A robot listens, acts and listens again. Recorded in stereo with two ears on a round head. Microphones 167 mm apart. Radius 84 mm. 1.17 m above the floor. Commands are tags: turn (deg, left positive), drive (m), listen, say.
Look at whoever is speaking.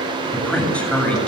<turn deg="30"/>
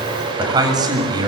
<turn deg="-25"/>
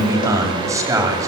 <turn deg="-20"/>
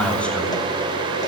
<say>Facing the man speaking.</say>